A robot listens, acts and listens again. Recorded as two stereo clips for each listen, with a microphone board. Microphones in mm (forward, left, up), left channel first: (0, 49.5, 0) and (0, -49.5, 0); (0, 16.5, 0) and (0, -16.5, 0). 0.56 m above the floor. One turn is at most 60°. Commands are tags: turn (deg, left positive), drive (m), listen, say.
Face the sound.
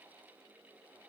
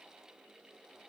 <listen/>
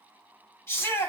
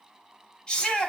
<turn deg="30"/>
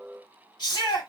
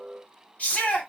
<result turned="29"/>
<turn deg="60"/>
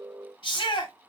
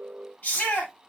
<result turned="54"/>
<turn deg="60"/>
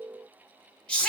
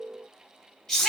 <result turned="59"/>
<turn deg="10"/>
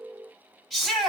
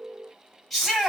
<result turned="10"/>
<say>Found it: a shout, straight ahead.</say>